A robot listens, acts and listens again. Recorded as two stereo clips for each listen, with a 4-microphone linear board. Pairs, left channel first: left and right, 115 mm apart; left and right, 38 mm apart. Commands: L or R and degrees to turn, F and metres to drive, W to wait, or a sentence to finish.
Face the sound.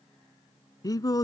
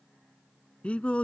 L35
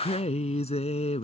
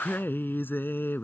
L105
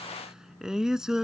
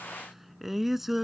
Found it: singing, straight ahead.